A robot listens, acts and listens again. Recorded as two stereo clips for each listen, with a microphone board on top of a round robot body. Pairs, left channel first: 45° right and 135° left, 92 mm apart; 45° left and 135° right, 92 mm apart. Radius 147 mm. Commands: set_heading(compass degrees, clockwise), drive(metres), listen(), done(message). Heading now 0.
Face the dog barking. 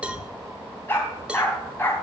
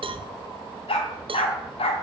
set_heading(340)
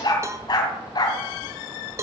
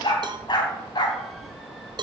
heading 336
done("Found it: a dog barking, straight ahead, 2 to 4 m away.")